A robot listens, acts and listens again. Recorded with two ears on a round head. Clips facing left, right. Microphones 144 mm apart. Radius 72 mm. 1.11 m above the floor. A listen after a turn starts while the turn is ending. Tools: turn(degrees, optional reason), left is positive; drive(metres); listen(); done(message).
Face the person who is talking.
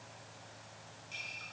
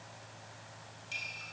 listen()
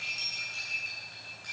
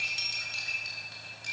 listen()
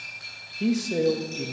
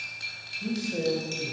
turn(degrees=90)
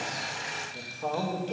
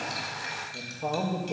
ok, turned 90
turn(degrees=-10, reason="So it is at 10° right.")
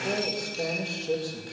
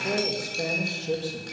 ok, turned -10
done("Found it: a man speaking, straight ahead.")